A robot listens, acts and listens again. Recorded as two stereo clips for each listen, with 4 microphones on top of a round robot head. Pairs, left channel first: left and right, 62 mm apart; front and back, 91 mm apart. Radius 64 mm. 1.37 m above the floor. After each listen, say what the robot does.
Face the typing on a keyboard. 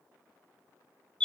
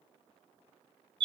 Keep listening.
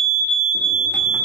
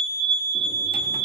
Keep listening.
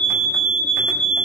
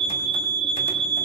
I can't make out typing on a keyboard to turn to.